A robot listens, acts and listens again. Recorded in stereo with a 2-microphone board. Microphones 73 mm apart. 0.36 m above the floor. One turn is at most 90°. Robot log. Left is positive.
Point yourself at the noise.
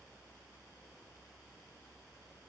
cmd idle
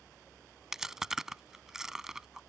cmd yaw -30
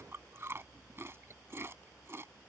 note: So it is at 145° right.
cmd yaw -90
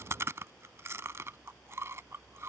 note: The chewing is now 40° right.
cmd yaw -40
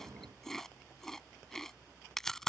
end: Found it: chewing, straight ahead.